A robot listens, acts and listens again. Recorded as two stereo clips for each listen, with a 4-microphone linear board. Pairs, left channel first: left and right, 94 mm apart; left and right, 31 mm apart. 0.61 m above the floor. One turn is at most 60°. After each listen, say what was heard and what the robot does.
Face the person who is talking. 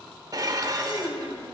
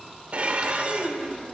The child speaking: about 70° left or 110° left. Turn 60° left.
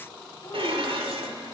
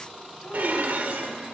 Keep listening.
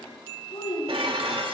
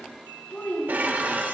So it is at 60° left. Turn 60° left.
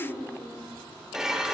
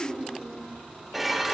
The child speaking is now 10° right. Turn 10° right.
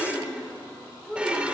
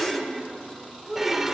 Facing the child speaking, over 4 m away.